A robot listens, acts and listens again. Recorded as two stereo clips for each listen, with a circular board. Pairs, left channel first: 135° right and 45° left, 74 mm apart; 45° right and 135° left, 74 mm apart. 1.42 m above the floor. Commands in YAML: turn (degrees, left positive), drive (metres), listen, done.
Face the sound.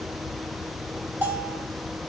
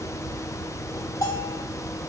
turn: -20
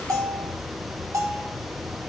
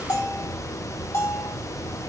done: "Facing the bell."